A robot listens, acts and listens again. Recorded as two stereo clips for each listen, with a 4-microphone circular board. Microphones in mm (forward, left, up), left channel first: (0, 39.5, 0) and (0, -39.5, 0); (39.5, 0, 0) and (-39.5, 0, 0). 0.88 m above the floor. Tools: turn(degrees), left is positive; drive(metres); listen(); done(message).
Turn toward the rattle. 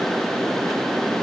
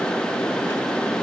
listen()
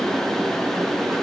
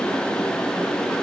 listen()
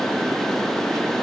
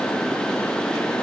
done("I can't make out a rattle.")